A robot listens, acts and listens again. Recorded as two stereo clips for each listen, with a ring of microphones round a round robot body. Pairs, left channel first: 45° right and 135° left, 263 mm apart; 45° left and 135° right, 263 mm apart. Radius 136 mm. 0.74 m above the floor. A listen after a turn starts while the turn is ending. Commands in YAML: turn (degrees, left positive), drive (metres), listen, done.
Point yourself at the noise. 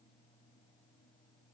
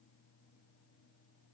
listen: true
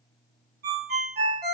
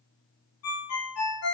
turn: 80
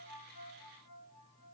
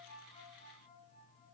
listen: true
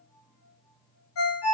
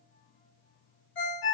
done: "Found it: a ringtone, straight ahead, 1 to 2 m away."